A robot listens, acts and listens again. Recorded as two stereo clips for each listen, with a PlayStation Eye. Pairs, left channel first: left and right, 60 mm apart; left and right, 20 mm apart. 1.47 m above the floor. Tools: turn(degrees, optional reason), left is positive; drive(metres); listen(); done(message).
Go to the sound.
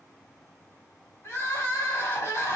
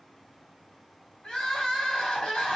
turn(degrees=60, reason="The crying: about 60° left or 120° left.")
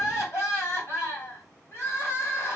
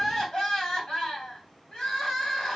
turn(degrees=50, reason="So it is at 50° left.")
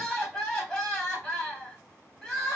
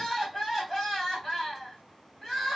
turn(degrees=10, reason="The crying is now 10° left.")
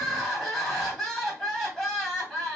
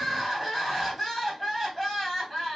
drive(metres=1.0)
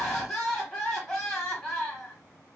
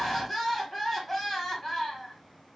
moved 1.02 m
drive(metres=1.0)
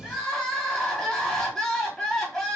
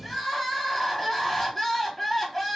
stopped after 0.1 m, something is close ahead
done("I am next to the crying.")